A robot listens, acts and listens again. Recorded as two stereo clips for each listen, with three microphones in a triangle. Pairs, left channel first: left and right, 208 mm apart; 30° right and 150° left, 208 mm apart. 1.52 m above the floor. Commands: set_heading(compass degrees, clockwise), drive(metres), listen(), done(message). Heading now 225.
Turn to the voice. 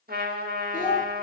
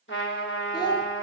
set_heading(185)
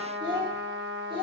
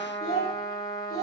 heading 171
set_heading(196)
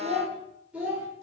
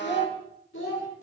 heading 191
done("Facing the child speaking.")